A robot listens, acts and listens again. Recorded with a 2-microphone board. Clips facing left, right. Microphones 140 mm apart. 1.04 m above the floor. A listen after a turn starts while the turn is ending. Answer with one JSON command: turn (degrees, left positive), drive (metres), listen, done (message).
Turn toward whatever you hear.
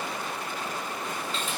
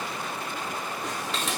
{"turn": -90}
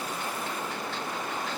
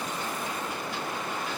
{"listen": true}
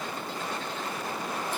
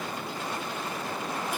{"listen": true}
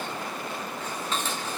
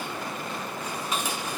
{"turn": -10}
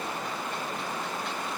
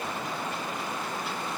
{"listen": true}
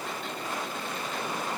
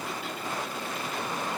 {"listen": true}
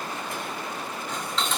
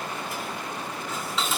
{"done": "Found it: dishes clattering, straight ahead."}